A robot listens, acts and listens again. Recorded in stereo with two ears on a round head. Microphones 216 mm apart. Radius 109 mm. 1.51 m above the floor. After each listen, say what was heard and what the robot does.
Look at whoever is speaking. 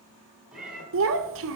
The child speaking: about 55° right or 125° right. Turn 55° right.
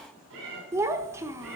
So it is at 10° right. Turn 10° right.
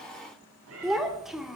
Facing the child speaking.